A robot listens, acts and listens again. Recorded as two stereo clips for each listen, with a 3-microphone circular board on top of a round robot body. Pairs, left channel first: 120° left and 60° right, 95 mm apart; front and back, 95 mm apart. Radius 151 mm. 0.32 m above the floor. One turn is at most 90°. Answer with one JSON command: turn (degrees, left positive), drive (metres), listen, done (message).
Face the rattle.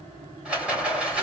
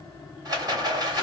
{"turn": -90}
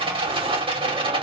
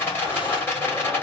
{"turn": -65}
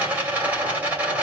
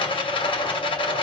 {"turn": 15}
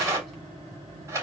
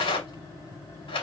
{"done": "Facing the rattle, 2 to 4 m away."}